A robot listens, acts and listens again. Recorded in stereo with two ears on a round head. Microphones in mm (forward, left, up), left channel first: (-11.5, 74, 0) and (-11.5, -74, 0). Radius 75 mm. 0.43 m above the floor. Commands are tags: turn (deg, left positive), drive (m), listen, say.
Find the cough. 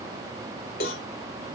<listen/>
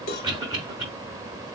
<turn deg="-30"/>
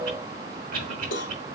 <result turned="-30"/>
<turn deg="-120"/>
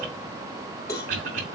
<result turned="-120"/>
<turn deg="-50"/>
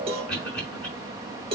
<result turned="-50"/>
<say>Facing the cough, over 4 m away.</say>